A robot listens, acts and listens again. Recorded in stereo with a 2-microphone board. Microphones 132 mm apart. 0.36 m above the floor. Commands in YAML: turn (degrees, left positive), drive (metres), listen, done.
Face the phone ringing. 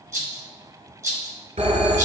turn: -55
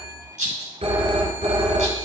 turn: -65
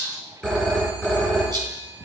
done: "Facing the phone ringing, 1 to 2 m away."